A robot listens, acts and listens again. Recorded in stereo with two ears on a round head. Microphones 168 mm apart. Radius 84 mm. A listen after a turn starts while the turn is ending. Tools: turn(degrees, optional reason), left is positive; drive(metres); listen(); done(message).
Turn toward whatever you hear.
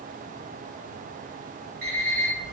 turn(degrees=-55, reason="The alarm clock: about 55° right or 125° right.")
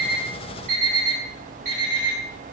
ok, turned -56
turn(degrees=-45, reason="So it is at 45° right.")
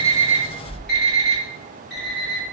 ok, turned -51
done("Facing the alarm clock.")